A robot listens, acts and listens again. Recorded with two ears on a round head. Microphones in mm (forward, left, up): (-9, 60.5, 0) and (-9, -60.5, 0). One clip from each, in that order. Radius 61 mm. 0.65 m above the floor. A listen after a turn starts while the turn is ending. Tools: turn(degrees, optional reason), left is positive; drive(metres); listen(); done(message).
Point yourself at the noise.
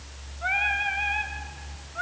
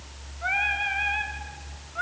turn(degrees=-30)
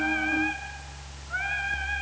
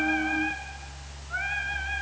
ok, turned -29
done("Facing the singing.")